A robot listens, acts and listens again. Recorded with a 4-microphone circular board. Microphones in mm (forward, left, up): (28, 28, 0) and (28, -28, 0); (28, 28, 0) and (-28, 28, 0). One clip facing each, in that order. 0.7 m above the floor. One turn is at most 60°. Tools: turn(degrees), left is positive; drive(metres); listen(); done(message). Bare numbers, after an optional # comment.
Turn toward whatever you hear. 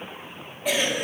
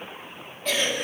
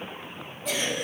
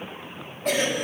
# The cough: 165° left.
turn(60)
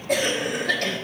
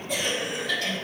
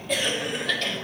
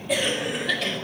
# The cough is now 95° left.
turn(60)
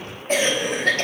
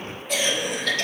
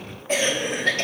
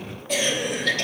# The cough is now 50° left.
turn(50)
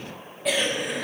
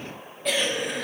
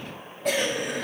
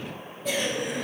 done("Found it: a cough, straight ahead.")